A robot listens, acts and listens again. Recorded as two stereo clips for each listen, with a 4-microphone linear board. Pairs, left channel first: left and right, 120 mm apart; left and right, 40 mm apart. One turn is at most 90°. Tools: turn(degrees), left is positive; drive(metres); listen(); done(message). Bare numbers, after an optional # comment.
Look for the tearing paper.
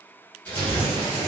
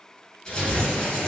turn(30)
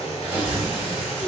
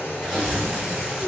# So it is at 15° right.
turn(-15)
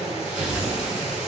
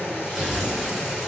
done("Found it: tearing paper, straight ahead.")